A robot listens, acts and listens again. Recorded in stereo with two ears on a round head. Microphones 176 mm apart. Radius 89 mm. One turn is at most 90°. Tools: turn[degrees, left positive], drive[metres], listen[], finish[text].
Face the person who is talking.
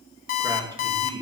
Thought: The man speaking: about 25° right or 155° right.
Action: turn[-25]
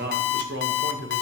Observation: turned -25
Thought: So it is at 110° right.
Action: turn[-90]
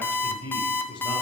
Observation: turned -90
Thought: The man speaking is now 20° left.
Action: turn[20]
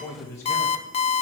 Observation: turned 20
Thought: The man speaking is now 15° left.
Action: turn[15]
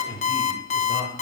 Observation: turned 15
Thought: The man speaking is now 20° left.
Action: turn[20]
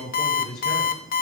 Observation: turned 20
Action: finish[Found it: a man speaking, straight ahead.]